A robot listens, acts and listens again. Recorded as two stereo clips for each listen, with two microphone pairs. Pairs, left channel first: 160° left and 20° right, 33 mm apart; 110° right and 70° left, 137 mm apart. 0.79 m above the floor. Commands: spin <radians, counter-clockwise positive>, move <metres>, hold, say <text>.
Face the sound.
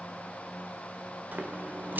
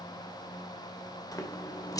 spin -0.79
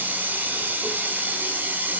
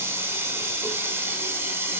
say Facing the running tap, 1 to 2 m away.